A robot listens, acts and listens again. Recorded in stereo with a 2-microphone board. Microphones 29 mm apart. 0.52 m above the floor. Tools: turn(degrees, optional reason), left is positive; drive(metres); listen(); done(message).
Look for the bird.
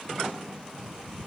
turn(degrees=-60, reason="The bird: about 60° right or 120° right.")
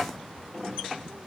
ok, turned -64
turn(degrees=-55, reason="So it is at 55° right.")
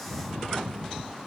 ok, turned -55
done("Facing the bird.")